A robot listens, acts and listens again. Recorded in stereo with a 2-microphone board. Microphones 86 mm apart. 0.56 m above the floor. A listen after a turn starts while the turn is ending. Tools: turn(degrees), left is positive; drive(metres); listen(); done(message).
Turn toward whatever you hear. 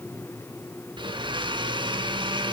turn(degrees=-70)
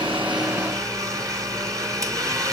turn(degrees=-40)
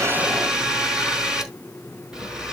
turn(degrees=-10)
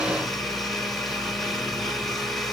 done("Facing the blender, 2 to 4 m away.")